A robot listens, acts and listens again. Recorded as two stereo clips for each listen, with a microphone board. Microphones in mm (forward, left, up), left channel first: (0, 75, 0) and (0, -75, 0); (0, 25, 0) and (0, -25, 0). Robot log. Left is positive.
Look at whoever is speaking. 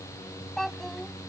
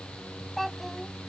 cmd yaw +30
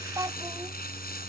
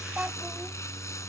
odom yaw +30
note: So it is at 25° right.
cmd yaw -25
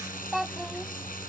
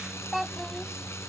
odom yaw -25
end: Found it: a child speaking, straight ahead.